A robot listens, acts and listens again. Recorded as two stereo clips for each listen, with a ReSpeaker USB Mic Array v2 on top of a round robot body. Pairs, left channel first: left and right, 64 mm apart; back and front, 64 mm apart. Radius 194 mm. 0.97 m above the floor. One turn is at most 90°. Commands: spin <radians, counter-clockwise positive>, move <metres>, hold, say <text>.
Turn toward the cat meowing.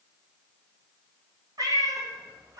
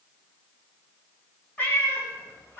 spin -1.57
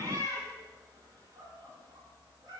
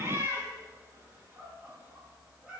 spin -1.31
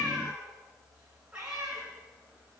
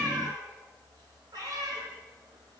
spin -0.17
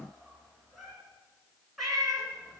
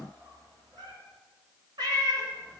say Facing the cat meowing, 2 to 4 m away.